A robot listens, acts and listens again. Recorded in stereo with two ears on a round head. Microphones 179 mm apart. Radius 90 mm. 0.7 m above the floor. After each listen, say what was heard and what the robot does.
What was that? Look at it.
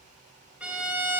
Turn 30° right.
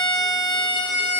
So it is at 20° left. Turn 20° left.
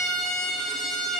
Facing the violin.